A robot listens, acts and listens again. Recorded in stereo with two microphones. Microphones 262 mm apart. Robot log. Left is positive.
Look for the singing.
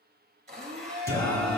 cmd yaw +30
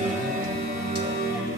note: So it is at 45° right.
cmd yaw -45
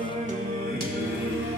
note: The singing is now 45° right.
cmd yaw -45
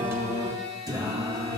note: The singing is now 15° right.
cmd yaw -15
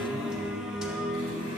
end: Found it: singing, straight ahead.